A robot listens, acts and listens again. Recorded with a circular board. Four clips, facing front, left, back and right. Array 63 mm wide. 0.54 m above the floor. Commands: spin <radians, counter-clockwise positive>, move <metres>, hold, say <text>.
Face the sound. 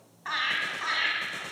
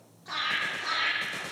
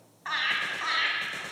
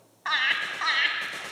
spin -1.66
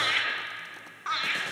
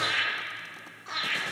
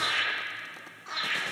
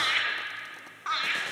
spin -0.79
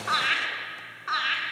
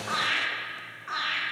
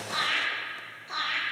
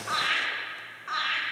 say Found it: laughter, straight ahead, over 4 m away.